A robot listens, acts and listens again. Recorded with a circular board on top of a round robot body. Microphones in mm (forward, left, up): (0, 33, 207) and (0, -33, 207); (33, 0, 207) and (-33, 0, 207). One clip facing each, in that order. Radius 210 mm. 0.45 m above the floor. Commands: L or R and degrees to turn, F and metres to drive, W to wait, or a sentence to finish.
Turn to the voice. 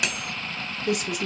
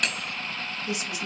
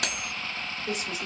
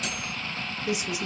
L105
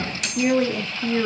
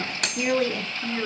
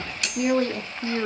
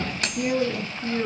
L20
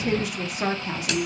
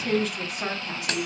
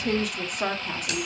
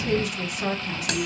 L35
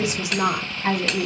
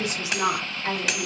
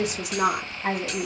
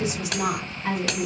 L30
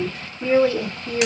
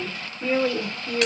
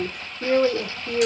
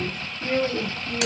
Found it: a woman speaking, straight ahead.